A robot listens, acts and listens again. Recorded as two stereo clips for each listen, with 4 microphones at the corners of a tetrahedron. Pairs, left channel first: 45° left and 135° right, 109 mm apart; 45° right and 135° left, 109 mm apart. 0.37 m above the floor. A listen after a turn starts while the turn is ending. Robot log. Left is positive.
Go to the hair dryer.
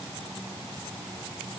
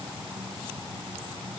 cmd idle
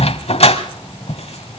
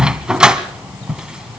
cmd idle
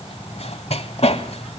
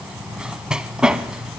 end: I can't make out a hair dryer, only a dog barking.